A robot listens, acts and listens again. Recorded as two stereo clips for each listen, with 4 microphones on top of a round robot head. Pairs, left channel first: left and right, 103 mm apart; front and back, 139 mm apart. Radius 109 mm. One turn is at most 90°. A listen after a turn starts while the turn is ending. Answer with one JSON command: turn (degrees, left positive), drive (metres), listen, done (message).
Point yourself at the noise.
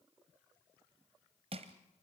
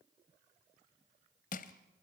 {"turn": -40}
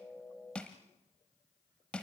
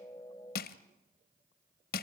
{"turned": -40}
{"done": "Found it: crushing, straight ahead, under 1 m away."}